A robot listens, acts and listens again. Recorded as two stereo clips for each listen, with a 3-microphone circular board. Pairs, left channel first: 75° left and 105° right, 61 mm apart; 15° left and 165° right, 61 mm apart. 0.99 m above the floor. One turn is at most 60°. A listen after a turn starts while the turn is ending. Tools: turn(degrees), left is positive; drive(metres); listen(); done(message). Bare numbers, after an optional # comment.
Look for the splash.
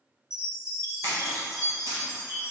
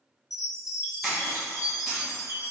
# The splash: 90° right.
turn(-60)
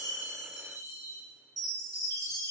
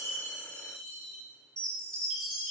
# Nothing new. It was at 30° right.
turn(-30)
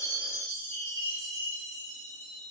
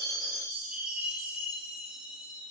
done("I heard a splash from this way, but can't make it out now.")